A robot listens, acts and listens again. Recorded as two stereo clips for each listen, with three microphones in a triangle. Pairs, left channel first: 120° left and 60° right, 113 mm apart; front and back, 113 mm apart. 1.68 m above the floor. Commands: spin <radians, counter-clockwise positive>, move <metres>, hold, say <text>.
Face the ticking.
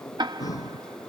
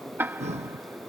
spin -1.92
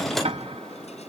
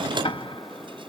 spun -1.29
spin -0.61
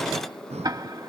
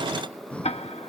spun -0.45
say Found it: ticking, straight ahead.